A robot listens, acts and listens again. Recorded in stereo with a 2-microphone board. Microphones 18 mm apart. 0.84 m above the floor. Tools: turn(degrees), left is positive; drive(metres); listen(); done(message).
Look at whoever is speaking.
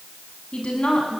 turn(degrees=70)
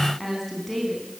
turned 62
turn(degrees=10)
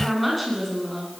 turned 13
done("Facing the woman speaking.")